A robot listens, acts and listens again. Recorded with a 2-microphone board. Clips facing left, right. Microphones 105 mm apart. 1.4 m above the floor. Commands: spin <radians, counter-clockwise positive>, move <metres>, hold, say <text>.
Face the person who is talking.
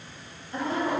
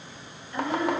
spin 0.61
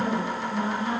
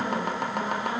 spin 1.92
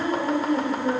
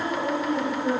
spin 0.17
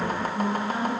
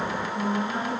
say Found it: a woman speaking, straight ahead.